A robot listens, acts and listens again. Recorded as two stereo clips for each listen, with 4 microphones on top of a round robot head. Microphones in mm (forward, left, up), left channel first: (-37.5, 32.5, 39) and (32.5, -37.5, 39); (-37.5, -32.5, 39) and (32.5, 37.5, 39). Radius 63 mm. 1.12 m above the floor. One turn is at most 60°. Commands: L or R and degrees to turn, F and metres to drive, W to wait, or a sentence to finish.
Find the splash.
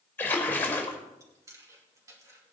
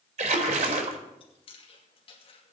L60
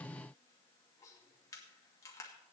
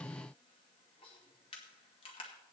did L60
I heard a splash from this way, but can't make it out now.